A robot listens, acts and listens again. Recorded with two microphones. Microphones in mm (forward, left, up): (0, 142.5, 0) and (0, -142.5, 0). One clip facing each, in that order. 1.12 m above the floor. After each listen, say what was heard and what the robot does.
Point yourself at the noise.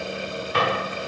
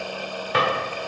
The drawer: about 75° right or 105° right. Turn 75° right.
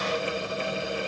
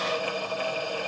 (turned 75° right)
Keep listening.
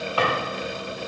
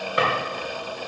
So it is at 25° right. Turn 25° right.
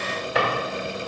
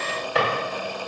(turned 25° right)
Facing the drawer, 2 to 4 m away.